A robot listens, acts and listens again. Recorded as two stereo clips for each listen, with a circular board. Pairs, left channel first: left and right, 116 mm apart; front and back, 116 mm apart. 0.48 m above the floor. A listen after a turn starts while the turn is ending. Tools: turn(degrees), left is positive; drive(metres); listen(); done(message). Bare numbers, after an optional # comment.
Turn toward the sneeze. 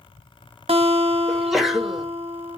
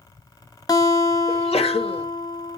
done("Facing the sneeze, 1 to 2 m away.")